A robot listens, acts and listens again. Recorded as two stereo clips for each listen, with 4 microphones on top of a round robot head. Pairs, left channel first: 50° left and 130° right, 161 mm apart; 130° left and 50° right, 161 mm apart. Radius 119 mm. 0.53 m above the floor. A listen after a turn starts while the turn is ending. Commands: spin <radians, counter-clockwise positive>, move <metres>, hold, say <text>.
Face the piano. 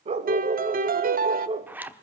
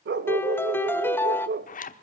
spin -2.71
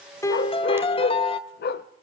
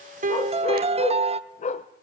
say Found it: a piano, straight ahead.